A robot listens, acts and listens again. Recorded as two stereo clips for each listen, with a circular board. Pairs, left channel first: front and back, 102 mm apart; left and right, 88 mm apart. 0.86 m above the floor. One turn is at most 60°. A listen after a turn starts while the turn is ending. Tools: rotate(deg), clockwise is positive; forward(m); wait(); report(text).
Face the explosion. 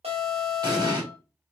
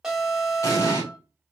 rotate(-60)
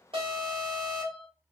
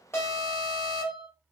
rotate(-60)
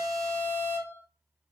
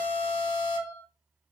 rotate(-20)
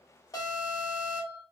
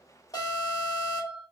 report("I heard an explosion from this way, but can't make it out now.")